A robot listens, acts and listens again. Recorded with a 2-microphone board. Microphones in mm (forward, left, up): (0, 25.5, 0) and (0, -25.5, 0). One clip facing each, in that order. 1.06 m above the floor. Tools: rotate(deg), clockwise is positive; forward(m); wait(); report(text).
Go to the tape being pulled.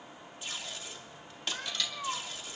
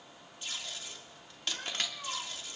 rotate(-30)
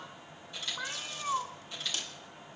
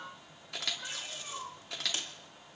rotate(25)
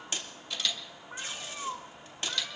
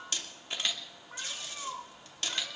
rotate(-15)
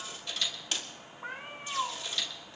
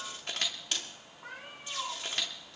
forward(1.0)
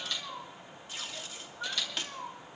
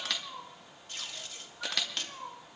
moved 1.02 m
forward(1.0)
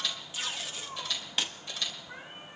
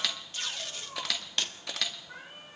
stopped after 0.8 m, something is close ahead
report("Arrived at the tape being pulled, straight ahead.")